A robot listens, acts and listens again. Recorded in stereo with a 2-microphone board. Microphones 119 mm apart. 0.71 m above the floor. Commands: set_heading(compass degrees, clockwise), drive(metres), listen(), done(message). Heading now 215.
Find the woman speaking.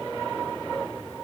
listen()
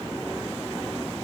listen()
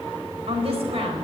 set_heading(270)
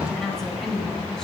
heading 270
done("Found it: a woman speaking, straight ahead.")